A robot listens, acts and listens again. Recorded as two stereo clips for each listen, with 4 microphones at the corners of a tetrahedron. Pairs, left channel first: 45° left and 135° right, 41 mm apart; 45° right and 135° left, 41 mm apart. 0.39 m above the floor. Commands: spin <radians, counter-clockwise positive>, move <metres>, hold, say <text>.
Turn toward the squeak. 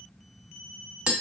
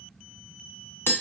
hold
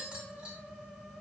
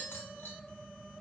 hold
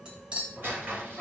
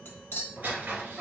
spin -2.97
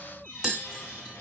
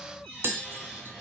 spin 0.70
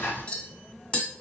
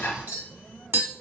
say Found it: a squeak, straight ahead, 2 to 4 m away.